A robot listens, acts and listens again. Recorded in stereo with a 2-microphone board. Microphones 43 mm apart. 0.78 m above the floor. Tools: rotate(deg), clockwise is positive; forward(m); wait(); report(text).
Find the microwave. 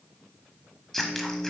rotate(25)
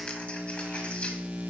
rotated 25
rotate(130)
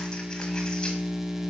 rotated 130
report("Found it: a microwave, straight ahead.")